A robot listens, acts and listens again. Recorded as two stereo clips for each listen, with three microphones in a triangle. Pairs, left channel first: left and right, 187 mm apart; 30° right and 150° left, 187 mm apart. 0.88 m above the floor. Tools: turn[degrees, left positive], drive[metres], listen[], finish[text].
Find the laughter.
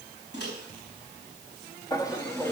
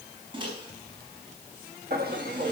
Thought: The laughter: 165° left.
Action: turn[165]
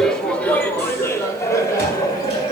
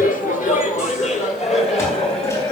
Thought: The laughter is now 25° left.
Action: turn[25]
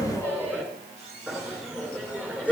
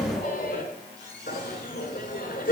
Thought: The laughter is now 10° right.
Action: turn[-10]
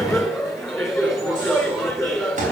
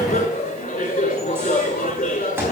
Action: finish[Found it: laughter, straight ahead.]